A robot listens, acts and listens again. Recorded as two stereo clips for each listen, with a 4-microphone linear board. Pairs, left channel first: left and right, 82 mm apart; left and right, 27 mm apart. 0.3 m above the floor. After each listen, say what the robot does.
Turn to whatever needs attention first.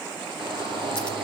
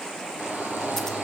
Turn 90° right.
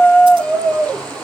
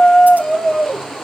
Turn 10° left.
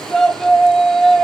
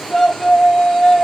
Found it: a shout, straight ahead, over 4 m away.